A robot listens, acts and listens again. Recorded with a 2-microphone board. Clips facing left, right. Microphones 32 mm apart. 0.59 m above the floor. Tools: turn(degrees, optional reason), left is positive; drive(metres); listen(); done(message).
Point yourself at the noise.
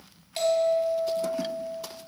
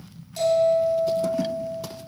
turn(degrees=55, reason="The bell: about 55° left or 125° left.")
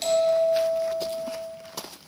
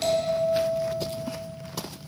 done("Found it: a bell, straight ahead, 1 to 2 m away.")